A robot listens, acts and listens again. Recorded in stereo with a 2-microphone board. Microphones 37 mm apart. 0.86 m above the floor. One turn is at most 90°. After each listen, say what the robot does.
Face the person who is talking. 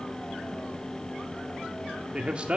Turn 30° right.
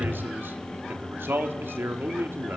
Turn 90° right.
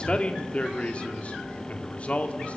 Turn 35° left.
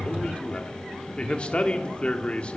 Turn 30° left.
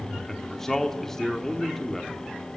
Turn 10° left.
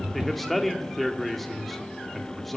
Found it: a man speaking, straight ahead, 1 to 2 m away.